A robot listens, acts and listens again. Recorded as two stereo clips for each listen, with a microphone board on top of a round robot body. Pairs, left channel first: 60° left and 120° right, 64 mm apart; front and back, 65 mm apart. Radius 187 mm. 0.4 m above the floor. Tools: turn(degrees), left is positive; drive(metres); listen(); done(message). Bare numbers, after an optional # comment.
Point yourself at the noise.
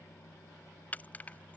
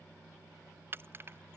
# The keys jangling: 130° left.
turn(130)
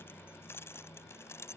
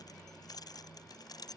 # The keys jangling is now 10° left.
turn(10)
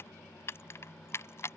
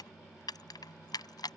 # The keys jangling is now 10° left.
turn(10)
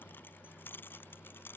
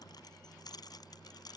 done("Found it: keys jangling, straight ahead.")